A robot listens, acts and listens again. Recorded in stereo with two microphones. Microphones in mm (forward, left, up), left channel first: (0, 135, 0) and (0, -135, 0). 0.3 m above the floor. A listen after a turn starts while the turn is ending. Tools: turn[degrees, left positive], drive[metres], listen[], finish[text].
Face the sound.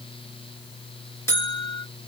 Action: turn[30]
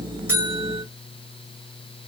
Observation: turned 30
Action: listen[]
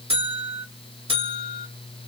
Thought: So it is at 20° right.
Action: turn[-20]
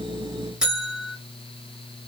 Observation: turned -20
Action: finish[Facing the buzzer, 1 to 2 m away.]